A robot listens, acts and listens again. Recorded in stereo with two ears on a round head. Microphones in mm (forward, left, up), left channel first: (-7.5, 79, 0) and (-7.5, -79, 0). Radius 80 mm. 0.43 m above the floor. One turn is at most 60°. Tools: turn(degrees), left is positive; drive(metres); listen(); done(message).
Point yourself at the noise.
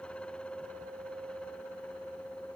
listen()
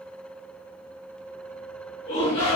turn(degrees=35)
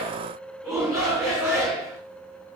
done("Found it: a shout, straight ahead.")